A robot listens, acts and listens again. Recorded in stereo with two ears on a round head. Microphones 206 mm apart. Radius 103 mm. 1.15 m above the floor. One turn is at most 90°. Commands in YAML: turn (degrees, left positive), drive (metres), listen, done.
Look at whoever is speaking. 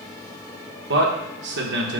turn: -50
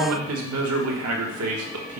turn: -80
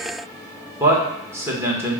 turn: -10
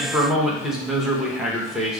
done: "Facing the man speaking, 1 to 2 m away."